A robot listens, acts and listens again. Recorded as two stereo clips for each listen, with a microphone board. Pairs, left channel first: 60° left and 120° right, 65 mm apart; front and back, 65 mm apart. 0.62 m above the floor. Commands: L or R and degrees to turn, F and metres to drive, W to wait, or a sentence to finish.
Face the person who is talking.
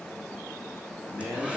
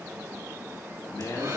R20
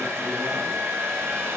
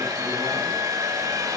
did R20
W
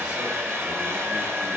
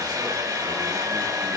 W
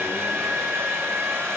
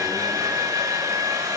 Facing where the man speaking came from. I can't hear it now.